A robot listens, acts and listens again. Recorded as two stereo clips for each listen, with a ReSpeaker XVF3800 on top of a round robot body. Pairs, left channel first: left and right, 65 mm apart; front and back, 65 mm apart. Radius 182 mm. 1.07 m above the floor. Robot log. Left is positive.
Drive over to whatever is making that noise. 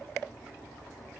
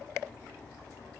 cmd idle
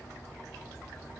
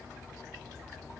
cmd idle
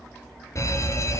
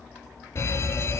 note: The fire alarm: 50° left.
cmd yaw +50
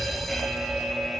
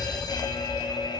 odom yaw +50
cmd fwd 1.0
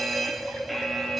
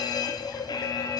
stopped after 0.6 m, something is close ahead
end: Blocked. The fire alarm is further on, straight ahead.